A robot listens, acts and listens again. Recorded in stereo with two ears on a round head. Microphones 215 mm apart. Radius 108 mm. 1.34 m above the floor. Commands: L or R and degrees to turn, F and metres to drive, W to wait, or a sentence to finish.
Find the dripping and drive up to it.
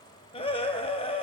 W
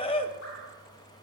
W
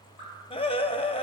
L55
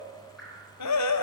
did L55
F1.0
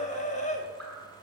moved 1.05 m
F1.0
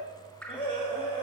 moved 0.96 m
F1.0
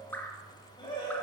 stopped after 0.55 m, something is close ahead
L10
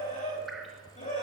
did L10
W
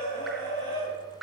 Arrived at the dripping, straight ahead.